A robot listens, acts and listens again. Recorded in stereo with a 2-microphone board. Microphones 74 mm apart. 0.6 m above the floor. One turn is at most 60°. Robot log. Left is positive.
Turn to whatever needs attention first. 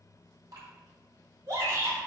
note: The shout: about 45° right or 135° right.
cmd yaw -45
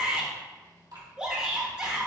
note: So it is at 15° right.
cmd yaw -15
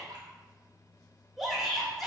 end: Facing the shout.